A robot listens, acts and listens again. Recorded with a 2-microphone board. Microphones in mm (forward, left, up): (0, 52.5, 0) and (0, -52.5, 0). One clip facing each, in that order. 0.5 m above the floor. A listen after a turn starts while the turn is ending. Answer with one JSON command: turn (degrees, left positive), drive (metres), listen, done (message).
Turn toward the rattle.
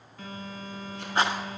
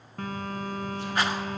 {"turn": 25}
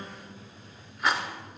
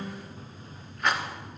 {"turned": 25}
{"done": "Found it: a rattle, straight ahead, 1 to 2 m away."}